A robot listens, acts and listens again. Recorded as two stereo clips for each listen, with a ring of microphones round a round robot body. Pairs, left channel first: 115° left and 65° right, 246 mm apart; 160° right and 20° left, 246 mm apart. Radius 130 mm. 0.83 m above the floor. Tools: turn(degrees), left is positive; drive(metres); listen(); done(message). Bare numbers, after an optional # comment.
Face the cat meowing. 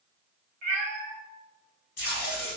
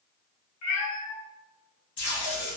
# The cat meowing: 120° right.
turn(-120)
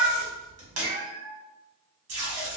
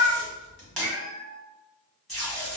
# The cat meowing is now 10° left.
turn(10)
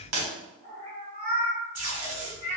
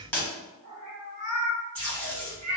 done("Found it: a cat meowing, straight ahead.")